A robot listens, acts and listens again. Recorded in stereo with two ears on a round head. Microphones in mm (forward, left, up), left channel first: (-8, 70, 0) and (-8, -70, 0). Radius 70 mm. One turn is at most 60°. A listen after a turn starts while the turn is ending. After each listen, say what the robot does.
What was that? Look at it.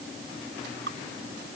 Turn 60° right.
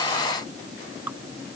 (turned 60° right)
Turn 10° right.
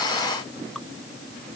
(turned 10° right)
Keep listening.
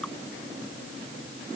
Keep listening.
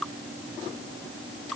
Found it: dripping, straight ahead.